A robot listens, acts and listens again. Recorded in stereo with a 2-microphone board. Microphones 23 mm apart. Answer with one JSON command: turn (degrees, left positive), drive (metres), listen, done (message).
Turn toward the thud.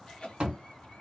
{"turn": -50}
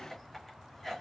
{"listen": true}
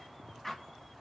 {"done": "I heard a thud, but can't make it out now. It was about straight ahead or 80° right."}